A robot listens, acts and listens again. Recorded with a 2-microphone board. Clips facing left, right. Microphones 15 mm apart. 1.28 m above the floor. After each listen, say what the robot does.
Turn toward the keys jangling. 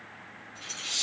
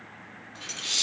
Turn 40° right.
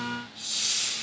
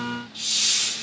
Keep listening.
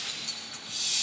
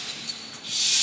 Facing the keys jangling.